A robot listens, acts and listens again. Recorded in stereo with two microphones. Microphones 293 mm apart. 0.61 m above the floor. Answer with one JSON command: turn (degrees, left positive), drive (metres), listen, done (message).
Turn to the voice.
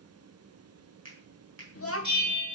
{"turn": 45}
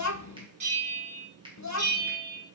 {"turn": 80}
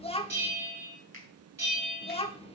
{"turn": 20}
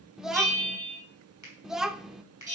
{"done": "Facing the child speaking, 1 to 2 m away."}